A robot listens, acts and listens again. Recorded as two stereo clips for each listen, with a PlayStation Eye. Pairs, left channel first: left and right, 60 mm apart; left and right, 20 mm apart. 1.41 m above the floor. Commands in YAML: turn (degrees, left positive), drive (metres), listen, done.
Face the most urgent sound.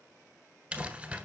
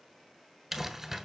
listen: true
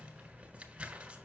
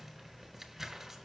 listen: true
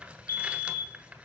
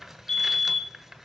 turn: 50
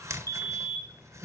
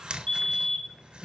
turn: 75
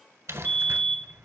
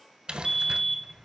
turn: 25
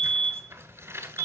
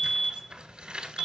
turn: 25
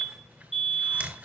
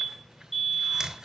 done: "Found it: a fire alarm, straight ahead, 1 to 2 m away."